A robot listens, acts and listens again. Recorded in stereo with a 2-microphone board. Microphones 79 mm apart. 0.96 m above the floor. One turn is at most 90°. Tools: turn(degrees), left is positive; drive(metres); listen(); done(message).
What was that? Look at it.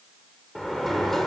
turn(degrees=30)
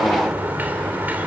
turn(degrees=-20)
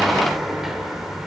done("Found it: a sliding door, straight ahead.")